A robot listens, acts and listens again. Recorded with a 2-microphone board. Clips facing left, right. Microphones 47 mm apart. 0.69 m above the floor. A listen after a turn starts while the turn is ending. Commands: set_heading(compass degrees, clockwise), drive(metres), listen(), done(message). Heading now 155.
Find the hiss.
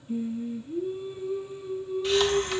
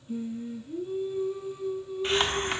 set_heading(190)
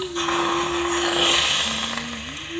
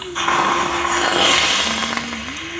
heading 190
set_heading(295)
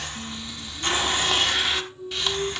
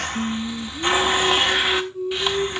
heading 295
set_heading(310)
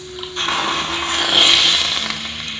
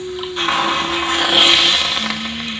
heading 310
done("Facing the hiss.")